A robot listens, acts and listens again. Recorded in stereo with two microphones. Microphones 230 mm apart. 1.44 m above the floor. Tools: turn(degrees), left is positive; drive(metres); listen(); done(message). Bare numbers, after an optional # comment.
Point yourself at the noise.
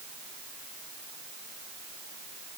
listen()
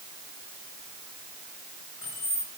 # The keys jangling: about 40° right or 140° right.
turn(-40)
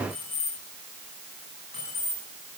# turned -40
# So it is at 100° right.
turn(-100)
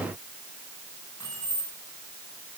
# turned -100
# The keys jangling is now 20° left.
turn(20)
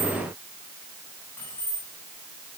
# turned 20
# The keys jangling is now 10° left.
turn(10)
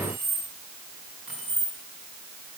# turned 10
done("Found it: keys jangling, straight ahead, over 4 m away.")